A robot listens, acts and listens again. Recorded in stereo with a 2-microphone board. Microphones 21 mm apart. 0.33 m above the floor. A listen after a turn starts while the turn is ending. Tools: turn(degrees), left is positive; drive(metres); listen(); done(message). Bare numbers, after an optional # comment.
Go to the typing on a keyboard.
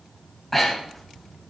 listen()
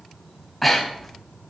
listen()
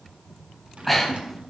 turn(-90)
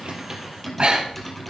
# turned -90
# So it is at 10° left.
turn(10)
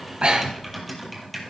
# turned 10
drive(1.0)
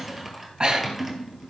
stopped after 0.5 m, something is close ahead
done("Something is in my way. I am facing the typing on a keyboard but have not reached it.")